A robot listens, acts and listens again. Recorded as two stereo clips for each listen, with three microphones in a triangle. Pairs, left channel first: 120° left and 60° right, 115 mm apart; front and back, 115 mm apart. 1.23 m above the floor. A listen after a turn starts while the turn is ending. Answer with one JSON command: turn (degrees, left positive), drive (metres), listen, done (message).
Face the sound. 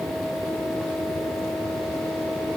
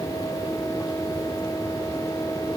{"listen": true}
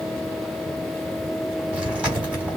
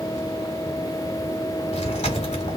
{"turn": 20}
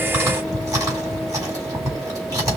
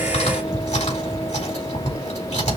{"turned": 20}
{"done": "Facing the chewing, 2 to 4 m away."}